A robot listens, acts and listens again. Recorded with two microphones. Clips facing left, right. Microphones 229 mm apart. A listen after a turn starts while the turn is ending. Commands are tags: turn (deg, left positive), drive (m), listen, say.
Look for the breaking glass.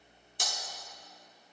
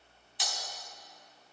<turn deg="50"/>
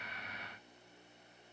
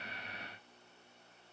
<listen/>
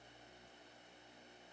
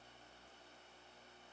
<say>I heard breaking glass, but can't make it out now. It was about straight ahead or 80° left.</say>